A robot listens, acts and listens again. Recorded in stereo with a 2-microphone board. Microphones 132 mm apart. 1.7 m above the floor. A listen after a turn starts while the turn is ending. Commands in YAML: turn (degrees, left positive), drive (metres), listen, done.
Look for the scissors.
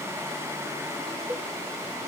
listen: true
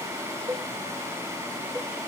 listen: true
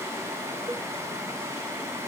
done: "I can't make out scissors, only a cowbell."